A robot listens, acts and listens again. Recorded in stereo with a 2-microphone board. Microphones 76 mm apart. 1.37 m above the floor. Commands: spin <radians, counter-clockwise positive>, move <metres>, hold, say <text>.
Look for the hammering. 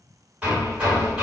spin -0.26
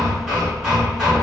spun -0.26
say Facing the hammering.